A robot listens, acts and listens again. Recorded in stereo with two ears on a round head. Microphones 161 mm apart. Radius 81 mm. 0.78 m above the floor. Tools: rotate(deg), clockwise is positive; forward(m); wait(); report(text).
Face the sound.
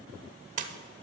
rotate(45)
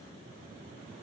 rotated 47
wait()
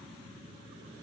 report("I heard a splash, but can't make it out now. It was about straight ahead or 90° right.")